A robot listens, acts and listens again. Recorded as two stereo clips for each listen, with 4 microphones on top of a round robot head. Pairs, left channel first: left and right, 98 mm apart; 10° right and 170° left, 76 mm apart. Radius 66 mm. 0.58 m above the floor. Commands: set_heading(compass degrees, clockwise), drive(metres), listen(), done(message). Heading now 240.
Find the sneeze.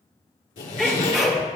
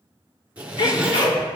done("Facing the sneeze.")